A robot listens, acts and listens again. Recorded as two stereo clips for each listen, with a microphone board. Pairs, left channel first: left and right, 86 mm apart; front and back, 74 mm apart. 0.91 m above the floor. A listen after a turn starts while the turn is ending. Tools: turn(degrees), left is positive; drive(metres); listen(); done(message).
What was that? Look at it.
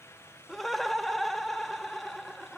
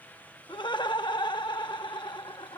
done("Found it: laughter, straight ahead.")